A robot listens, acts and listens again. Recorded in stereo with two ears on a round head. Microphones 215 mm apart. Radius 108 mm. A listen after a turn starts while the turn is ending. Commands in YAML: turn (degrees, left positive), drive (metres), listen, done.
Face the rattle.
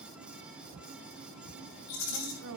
turn: 90
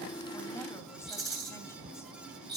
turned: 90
done: "Found it: a rattle, straight ahead, over 4 m away."